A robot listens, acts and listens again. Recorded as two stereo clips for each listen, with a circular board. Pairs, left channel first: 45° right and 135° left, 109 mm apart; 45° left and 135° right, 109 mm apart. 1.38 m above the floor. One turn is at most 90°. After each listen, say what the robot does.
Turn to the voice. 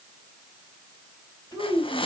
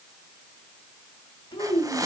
Turn 10° left.
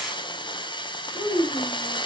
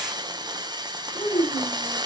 Facing the child speaking.